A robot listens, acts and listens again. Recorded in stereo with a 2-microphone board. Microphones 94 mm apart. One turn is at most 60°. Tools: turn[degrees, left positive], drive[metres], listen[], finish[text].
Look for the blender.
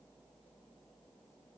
Action: listen[]
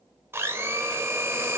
Thought: The blender: about 25° right or 155° right.
Action: turn[-25]
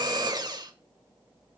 Thought: So it is at 130° right.
Action: turn[-60]
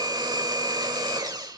Thought: The blender is now 50° right.
Action: turn[-50]
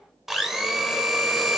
Action: finish[Found it: a blender, straight ahead.]